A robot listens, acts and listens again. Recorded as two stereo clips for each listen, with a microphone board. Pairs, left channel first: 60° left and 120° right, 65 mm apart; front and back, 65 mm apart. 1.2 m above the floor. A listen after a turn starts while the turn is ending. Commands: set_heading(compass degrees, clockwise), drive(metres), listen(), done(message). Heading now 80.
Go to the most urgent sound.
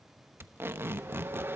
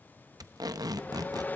listen()
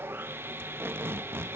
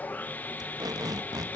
listen()
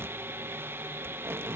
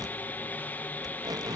done("I can't make out anything urgent to turn to.")